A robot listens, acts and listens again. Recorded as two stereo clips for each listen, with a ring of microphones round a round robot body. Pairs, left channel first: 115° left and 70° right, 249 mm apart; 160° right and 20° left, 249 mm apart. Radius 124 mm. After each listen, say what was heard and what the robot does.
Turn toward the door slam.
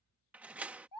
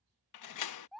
The door slam: 150° right. Turn 150° right.
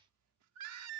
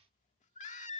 Facing where the door slam came from. I can't hear it now.